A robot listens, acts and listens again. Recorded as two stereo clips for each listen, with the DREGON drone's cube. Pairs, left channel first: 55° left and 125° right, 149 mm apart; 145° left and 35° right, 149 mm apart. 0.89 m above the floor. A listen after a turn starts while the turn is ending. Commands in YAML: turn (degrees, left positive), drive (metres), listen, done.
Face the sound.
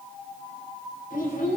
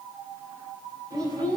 turn: 30
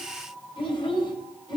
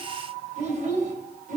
done: "Found it: a child speaking, straight ahead."